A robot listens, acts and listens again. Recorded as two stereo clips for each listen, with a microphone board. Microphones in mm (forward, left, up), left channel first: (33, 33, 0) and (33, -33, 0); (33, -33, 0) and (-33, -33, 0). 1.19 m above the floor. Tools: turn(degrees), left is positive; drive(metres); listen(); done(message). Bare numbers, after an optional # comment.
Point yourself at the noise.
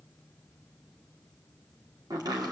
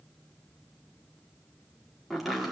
# The chopping: 90° right.
turn(-90)
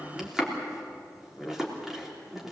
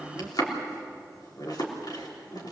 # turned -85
done("Facing the chopping.")